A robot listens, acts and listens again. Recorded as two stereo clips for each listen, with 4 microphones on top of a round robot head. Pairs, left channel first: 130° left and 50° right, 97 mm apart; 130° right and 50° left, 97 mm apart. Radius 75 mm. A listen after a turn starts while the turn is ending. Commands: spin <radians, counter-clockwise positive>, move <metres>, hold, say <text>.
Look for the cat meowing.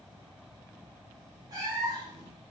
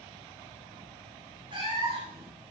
spin 0.17
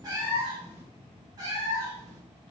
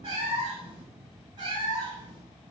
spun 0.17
say Found it: a cat meowing, straight ahead, 2 to 4 m away.